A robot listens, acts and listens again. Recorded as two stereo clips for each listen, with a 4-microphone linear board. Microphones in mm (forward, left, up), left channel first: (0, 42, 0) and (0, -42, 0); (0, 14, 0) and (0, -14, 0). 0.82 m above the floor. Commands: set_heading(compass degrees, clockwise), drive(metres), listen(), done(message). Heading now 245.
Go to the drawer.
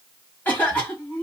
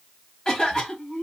listen()
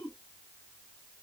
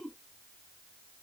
listen()
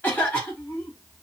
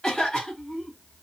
done("I can't make out a drawer, only a cough.")